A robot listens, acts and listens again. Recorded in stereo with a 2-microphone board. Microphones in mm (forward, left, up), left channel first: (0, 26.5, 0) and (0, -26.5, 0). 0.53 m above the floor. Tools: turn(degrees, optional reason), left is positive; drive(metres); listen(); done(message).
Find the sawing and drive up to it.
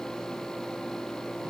listen()
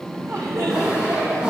turn(degrees=-15, reason="The sawing: about 15° right or 165° right.")
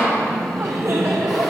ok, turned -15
listen()
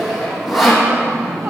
drive(metres=1.0)
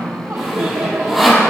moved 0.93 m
drive(metres=1.0)
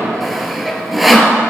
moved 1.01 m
drive(metres=1.0)
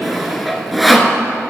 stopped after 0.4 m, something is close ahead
done("I am next to the sawing.")